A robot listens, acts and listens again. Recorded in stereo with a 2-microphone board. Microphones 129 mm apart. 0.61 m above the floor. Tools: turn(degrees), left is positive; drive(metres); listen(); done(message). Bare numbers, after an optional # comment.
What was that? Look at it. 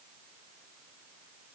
listen()
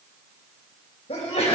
# The sneeze: about 65° left or 115° left.
turn(65)
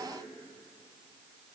listen()
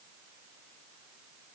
done("I heard a sneeze, but can't make it out now. It was about straight ahead or 50° left.")